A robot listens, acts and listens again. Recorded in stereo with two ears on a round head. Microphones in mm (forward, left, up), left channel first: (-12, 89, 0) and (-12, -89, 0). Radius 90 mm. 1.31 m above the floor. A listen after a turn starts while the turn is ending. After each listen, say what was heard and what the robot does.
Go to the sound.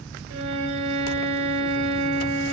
Turn 90° right.
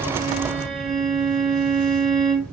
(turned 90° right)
Drive 1.0 m forward.
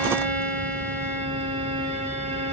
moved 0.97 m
Drive 1.0 m forward.
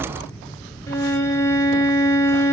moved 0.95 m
The violin is now 15° left. Turn 15° left.
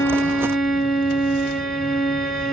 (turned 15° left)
Drive 1.0 m forward.
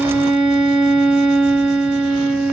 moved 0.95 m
Drive 1.0 m forward.
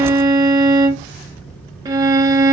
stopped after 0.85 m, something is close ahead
The violin is now 20° right. Turn 20° right.
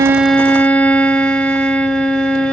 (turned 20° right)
Arrived at the violin, straight ahead.